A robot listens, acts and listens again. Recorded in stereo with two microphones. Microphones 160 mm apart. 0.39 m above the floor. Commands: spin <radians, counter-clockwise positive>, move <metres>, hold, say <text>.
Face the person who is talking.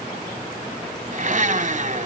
hold
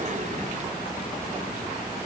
hold
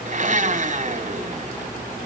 say I can't make out anyone speaking to turn to.